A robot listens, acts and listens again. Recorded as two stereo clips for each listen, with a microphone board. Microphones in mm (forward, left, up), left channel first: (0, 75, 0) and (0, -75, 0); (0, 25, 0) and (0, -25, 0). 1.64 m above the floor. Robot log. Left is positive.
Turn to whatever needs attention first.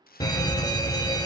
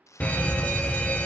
note: The fire alarm: about 25° left or 155° left.
cmd yaw +25
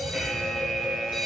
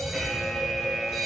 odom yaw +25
end: Found it: a fire alarm, straight ahead, 1 to 2 m away.